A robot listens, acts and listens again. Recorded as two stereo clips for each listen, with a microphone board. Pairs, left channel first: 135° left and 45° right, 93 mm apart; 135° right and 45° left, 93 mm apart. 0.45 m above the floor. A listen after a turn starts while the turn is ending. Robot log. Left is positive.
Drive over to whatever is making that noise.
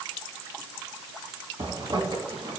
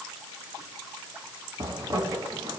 cmd fwd 1.0
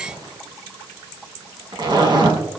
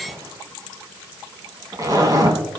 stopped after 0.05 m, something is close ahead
end: Blocked. The zipper is further on, straight ahead.